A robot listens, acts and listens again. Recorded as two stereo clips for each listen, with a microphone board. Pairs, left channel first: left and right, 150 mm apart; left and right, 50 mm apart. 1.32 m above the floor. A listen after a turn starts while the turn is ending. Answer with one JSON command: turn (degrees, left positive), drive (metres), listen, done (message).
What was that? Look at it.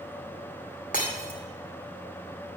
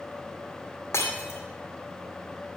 {"turn": 65}
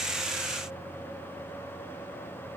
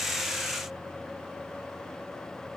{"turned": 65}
{"listen": true}
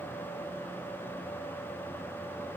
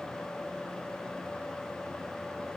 {"done": "I heard breaking glass, but can't make it out now. It was about straight ahead or 50° left."}